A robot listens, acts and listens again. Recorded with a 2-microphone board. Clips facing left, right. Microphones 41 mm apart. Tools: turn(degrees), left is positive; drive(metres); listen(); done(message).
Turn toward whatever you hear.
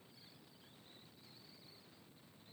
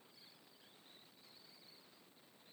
listen()
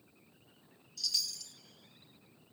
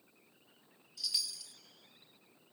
turn(degrees=-30)
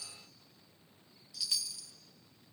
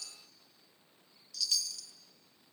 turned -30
turn(degrees=15)
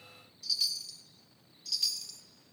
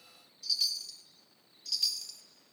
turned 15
done("Found it: a chime, straight ahead.")